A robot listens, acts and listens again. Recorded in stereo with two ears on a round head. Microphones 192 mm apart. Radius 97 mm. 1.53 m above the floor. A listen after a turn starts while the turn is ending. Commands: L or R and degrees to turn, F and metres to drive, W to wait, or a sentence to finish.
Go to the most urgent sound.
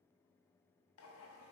W
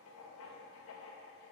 W
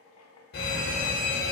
L50
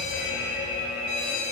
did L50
L70
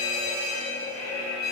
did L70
L20
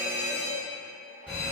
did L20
F1.0
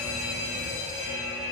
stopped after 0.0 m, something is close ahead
Blocked. The fire alarm is further on, straight ahead.